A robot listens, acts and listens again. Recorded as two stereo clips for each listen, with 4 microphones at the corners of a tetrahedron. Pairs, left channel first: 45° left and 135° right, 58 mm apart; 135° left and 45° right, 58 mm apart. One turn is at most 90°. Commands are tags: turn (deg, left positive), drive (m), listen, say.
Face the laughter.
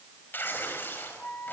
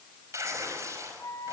<listen/>
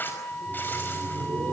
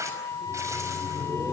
<turn deg="-90"/>
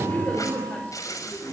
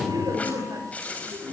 <turn deg="-25"/>
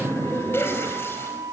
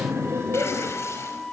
<say>Facing the laughter, over 4 m away.</say>